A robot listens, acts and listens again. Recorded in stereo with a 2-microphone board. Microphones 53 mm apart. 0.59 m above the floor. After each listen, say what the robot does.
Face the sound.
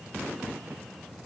Keep listening.
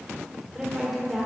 Turn 30° left.
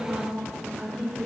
Turn 15° right.
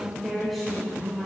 Found it: a woman speaking, straight ahead.